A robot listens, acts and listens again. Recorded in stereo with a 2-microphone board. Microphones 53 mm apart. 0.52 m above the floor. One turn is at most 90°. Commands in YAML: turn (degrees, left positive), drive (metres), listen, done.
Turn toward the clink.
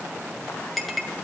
turn: 30
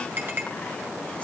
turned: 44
turn: -40
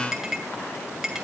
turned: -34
done: "Facing the clink."